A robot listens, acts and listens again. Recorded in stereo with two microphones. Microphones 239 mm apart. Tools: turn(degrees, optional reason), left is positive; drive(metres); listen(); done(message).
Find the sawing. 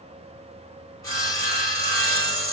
turn(degrees=30)
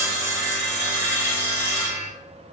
turn(degrees=-10, reason="So it is at 10° right.")
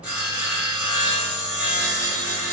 done("Facing the sawing, 1 to 2 m away.")